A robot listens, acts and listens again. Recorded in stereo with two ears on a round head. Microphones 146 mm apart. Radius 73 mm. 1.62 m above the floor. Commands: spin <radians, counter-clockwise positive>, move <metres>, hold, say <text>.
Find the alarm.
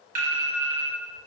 spin -0.96
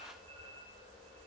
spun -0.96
hold
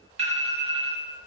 spin -0.87
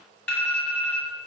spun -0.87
spin 0.26
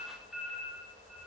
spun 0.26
say Found it: an alarm, straight ahead, 1 to 2 m away.